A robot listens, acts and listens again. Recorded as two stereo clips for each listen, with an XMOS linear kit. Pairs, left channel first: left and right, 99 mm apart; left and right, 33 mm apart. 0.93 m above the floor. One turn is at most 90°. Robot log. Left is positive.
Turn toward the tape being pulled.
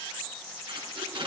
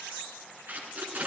note: The tape being pulled: about 60° right or 120° right.
cmd yaw -60
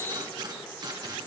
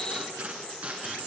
note: So it is at 50° right.
cmd yaw -50
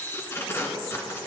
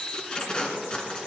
note: The tape being pulled is now 30° left.
cmd yaw +30
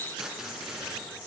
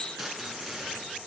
end: Found it: tape being pulled, straight ahead, 1 to 2 m away.